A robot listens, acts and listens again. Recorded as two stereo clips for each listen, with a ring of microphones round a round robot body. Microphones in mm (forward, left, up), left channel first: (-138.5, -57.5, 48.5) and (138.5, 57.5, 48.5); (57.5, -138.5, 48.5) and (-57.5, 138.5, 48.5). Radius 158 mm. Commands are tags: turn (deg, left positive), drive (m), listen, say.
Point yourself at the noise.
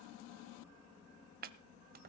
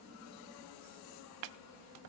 <turn deg="85"/>
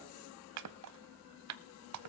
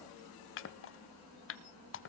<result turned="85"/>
<turn deg="-15"/>
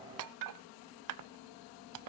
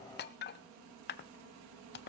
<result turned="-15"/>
<turn deg="-10"/>
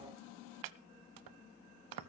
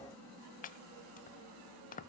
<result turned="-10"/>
<say>Facing the chopping.</say>